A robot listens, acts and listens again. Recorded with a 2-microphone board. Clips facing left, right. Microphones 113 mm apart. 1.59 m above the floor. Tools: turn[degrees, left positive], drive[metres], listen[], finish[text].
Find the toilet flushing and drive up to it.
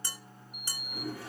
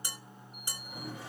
Thought: The toilet flushing: about 20° right or 160° right.
Action: turn[-20]
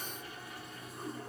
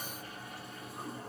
Thought: So it is at 140° right.
Action: turn[-140]
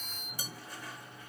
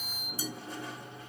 Thought: The toilet flushing is now 25° right.
Action: turn[-25]
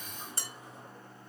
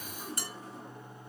Action: drive[1.0]
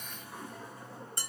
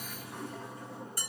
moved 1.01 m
Action: drive[1.0]
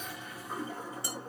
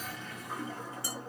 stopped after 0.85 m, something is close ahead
Thought: The toilet flushing is now 10° left.
Action: turn[10]
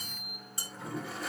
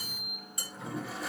Action: finish[Arrived at the toilet flushing, straight ahead.]